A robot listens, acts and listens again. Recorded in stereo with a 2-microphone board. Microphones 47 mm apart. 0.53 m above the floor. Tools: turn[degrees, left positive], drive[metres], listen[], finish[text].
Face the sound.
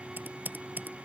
Thought: The typing on a keyboard: about 40° right or 140° right.
Action: turn[-40]
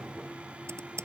Thought: So it is at 100° right.
Action: turn[-100]
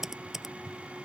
Thought: The typing on a keyboard is now 10° right.
Action: turn[-10]
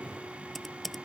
Action: finish[Found it: typing on a keyboard, straight ahead.]